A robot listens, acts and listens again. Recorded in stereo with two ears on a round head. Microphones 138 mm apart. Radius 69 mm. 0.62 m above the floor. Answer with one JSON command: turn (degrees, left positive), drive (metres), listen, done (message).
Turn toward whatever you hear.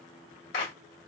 {"turn": 70}
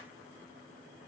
{"listen": true}
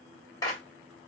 {"turn": 25}
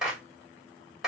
{"done": "Found it: a clap, straight ahead, 2 to 4 m away."}